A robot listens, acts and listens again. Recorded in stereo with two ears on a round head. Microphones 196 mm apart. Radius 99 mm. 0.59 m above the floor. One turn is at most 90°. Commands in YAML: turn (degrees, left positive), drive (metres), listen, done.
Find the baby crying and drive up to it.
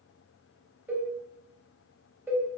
listen: true
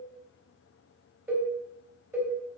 listen: true
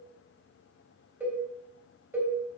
done: "I can't make out a baby crying to turn to."